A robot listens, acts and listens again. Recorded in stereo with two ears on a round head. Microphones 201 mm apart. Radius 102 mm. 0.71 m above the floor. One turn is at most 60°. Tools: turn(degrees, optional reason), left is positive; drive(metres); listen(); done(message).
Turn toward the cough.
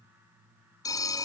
listen()
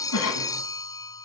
turn(degrees=60)
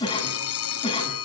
turn(degrees=25, reason="So it is at 25° left.")
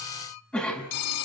done("Found it: a cough, straight ahead.")